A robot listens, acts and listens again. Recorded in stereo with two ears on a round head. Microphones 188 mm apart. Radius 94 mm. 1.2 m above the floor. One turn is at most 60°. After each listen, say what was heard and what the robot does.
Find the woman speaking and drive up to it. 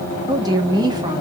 The woman speaking: about 20° right or 160° right. Turn 20° right.
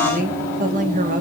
So it is at 140° right. Turn 60° right.
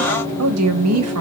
The woman speaking is now 85° right. Turn 60° right.
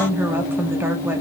The woman speaking is now 10° right. Turn 10° right.
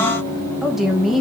Drive 1.0 m forward.
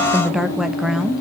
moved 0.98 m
Drive 1.0 m forward.
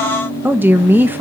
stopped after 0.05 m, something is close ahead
The woman speaking is now 10° right. Turn 10° right.
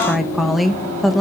I am next to the woman speaking.